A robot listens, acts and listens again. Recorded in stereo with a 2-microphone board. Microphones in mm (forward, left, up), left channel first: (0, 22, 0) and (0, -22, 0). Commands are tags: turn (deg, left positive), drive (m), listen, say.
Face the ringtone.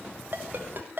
<turn deg="-45"/>
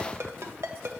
<turn deg="-90"/>
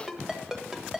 <turn deg="-10"/>
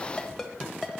<say>Found it: a ringtone, straight ahead, 1 to 2 m away.</say>